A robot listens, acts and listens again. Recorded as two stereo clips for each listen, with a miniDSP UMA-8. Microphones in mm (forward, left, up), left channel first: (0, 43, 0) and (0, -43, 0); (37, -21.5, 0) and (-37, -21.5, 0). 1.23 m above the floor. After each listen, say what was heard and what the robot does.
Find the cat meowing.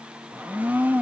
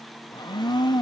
Keep listening.
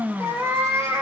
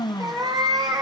The cat meowing: 150° right. Turn 150° right.
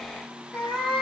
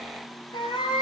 Facing the cat meowing, over 4 m away.